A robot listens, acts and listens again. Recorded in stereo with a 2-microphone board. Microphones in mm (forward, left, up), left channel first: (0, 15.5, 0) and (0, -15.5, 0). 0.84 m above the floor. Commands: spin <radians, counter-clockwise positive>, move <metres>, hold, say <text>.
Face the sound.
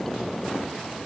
hold
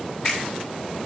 hold
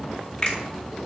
spin 0.52
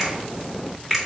say Found it: a finger snap, straight ahead.